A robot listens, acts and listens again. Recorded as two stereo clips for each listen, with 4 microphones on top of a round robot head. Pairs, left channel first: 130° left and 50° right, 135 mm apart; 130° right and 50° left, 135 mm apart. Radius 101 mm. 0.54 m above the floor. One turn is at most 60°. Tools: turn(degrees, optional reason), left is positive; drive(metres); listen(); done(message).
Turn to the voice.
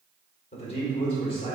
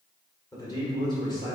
turn(degrees=60, reason="The man speaking: 175° left.")
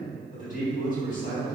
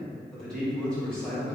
turn(degrees=60, reason="The man speaking is now 150° left.")
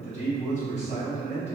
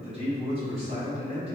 turn(degrees=60, reason="The man speaking is now 100° left.")
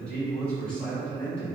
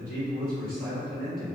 turn(degrees=50, reason="The man speaking is now 50° left.")
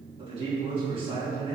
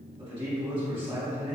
done("Found it: a man speaking, straight ahead.")